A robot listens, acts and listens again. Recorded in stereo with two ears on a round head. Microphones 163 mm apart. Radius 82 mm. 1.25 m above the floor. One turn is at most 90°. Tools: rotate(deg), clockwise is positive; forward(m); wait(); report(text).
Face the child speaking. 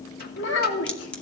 rotate(-65)
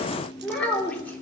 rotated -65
rotate(-10)
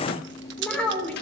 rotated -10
report("Found it: a child speaking, straight ahead, 2 to 4 m away.")